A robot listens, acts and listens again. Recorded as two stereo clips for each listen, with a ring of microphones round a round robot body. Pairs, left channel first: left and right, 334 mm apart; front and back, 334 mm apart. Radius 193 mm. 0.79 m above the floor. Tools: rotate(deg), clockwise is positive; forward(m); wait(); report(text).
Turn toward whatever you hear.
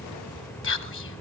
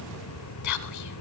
rotate(-40)
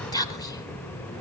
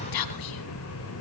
rotate(-10)
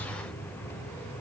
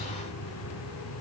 wait()
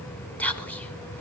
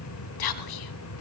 report("Found it: whispering, straight ahead.")